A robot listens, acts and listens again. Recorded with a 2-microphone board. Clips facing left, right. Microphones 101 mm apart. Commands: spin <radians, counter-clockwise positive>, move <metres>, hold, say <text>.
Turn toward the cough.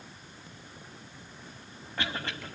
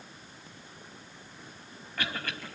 spin 0.44
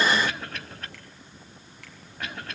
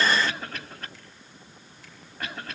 say Facing the cough, over 4 m away.